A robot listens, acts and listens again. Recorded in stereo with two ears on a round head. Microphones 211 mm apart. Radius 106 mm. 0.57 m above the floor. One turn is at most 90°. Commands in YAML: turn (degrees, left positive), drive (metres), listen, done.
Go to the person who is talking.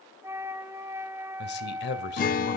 turn: 45
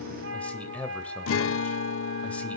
drive: 1.0
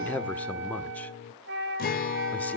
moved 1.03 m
turn: 10
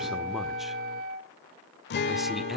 listen: true
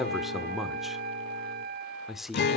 drive: 1.0
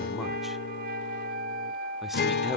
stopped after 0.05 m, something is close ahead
listen: true
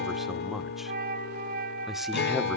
done: "Arrived at the man speaking, straight ahead."